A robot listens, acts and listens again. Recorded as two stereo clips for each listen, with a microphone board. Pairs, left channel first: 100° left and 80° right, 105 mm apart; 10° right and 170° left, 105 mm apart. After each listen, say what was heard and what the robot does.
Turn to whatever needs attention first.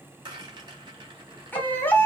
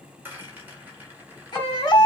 The baby crying: 30° left. Turn 30° left.
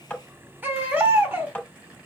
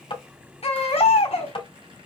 The baby crying is now 10° right. Turn 10° right.
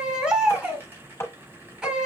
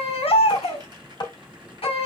Facing the baby crying.